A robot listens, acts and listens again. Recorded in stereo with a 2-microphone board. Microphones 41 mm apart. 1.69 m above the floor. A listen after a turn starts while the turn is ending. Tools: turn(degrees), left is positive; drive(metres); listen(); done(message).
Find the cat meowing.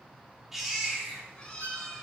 turn(degrees=20)
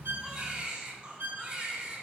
listen()
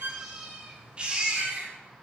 turn(degrees=-15)
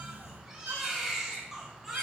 turn(degrees=-15)
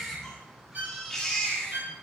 done("Facing the cat meowing, over 4 m away.")